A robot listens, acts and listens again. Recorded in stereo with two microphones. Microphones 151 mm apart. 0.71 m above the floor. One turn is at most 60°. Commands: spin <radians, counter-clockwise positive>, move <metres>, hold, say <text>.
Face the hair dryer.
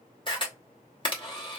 hold
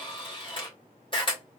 hold
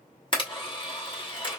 say I can't make out a hair dryer, only a camera shutter.